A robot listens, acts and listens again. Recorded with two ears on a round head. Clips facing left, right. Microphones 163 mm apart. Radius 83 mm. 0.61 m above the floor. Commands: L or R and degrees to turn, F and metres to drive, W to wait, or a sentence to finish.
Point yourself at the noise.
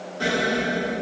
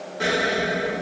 R20
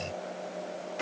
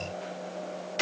W
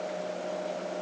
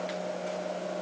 I heard an explosion, but can't make it out now. It was about straight ahead or 140° right.